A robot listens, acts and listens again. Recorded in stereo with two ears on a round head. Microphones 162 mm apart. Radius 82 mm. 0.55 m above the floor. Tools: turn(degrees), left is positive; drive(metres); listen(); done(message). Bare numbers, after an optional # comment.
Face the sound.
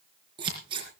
# The scissors: about 25° right or 155° right.
turn(-25)
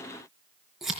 done("Found it: scissors, straight ahead.")